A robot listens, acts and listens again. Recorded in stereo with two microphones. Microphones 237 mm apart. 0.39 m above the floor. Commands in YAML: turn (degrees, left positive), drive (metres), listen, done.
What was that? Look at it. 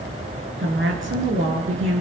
turn: -60
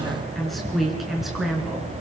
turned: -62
done: "Found it: a woman speaking, straight ahead."